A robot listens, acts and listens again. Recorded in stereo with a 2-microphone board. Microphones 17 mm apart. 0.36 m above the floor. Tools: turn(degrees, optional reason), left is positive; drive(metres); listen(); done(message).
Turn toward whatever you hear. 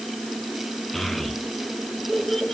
turn(degrees=30)
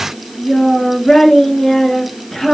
turn(degrees=150, reason="So it is at 150° left.")
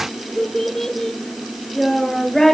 turn(degrees=20, reason="The child speaking is now 20° left.")
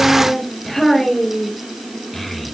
done("Found it: a child speaking, straight ahead, over 4 m away.")